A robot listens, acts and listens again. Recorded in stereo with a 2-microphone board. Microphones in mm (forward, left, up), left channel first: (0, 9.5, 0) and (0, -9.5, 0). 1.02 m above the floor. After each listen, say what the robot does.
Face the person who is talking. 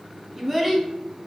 Turn 30° right.
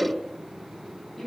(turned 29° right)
Turn 15° left.
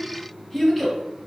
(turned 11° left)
Found it: a child speaking, straight ahead.